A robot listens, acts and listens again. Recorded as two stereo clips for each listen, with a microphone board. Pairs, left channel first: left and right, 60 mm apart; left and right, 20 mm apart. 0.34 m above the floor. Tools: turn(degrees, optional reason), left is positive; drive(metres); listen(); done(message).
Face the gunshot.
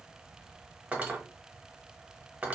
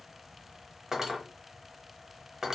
listen()
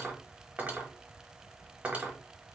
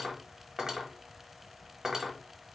listen()
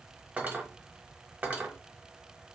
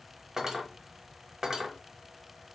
done("I can't make out a gunshot, only cutlery clinking.")